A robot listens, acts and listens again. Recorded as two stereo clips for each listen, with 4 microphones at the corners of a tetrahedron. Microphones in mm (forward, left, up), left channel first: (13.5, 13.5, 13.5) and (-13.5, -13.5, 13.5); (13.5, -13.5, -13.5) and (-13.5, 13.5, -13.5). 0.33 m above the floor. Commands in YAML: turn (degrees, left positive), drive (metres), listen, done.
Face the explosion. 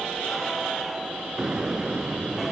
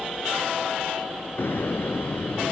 turn: -65
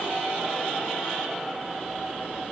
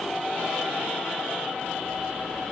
done: "I heard an explosion from this way, but can't make it out now."